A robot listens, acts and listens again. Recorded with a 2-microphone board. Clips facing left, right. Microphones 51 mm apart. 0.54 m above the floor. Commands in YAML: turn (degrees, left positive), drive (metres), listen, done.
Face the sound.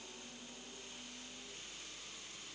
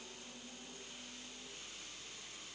listen: true
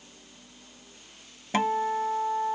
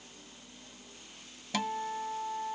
turn: 35
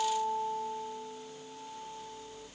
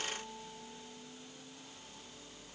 turn: 110
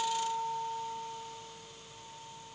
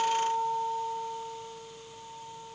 turn: -25
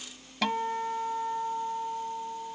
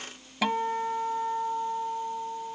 turn: -10
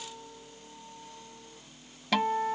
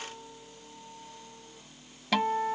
done: "Found it: a guitar, straight ahead."